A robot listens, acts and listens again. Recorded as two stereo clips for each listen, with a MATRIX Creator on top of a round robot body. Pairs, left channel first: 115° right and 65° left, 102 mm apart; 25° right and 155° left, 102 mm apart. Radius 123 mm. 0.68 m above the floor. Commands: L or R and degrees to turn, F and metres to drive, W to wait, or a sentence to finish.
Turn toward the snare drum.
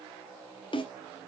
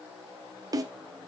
R150
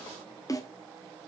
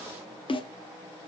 R55
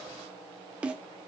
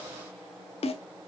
R10
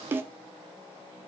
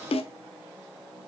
Found it: a snare drum, straight ahead, under 1 m away.